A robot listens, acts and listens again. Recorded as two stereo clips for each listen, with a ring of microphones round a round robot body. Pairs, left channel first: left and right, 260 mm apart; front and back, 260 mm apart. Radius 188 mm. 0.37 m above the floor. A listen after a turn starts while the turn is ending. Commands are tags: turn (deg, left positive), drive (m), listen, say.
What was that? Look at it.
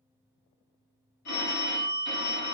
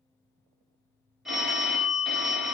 <turn deg="90"/>
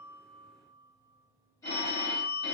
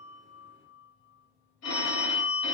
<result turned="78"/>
<turn deg="10"/>
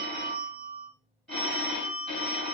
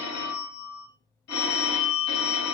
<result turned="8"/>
<say>Facing the phone ringing.</say>